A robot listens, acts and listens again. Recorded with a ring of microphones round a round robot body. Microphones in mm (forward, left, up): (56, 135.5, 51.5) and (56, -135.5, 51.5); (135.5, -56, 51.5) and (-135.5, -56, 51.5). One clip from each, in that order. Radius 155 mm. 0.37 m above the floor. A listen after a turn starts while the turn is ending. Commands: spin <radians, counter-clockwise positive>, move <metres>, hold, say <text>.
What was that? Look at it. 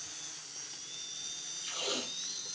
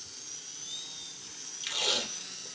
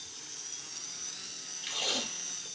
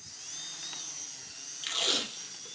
spin -2.36
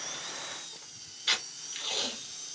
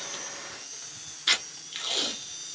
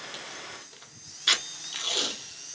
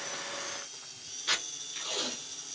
spin -0.44
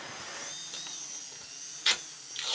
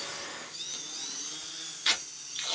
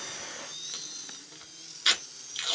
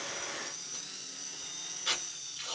say Facing the tape being pulled, 1 to 2 m away.